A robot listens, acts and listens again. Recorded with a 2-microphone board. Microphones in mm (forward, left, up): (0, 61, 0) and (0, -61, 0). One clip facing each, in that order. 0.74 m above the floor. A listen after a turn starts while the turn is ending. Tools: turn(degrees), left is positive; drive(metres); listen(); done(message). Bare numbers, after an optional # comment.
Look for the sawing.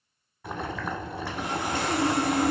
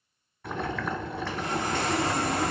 turn(30)
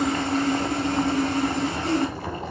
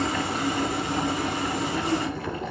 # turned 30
# So it is at 15° right.
turn(-15)
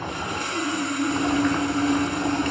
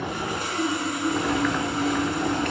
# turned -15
done("Facing the sawing.")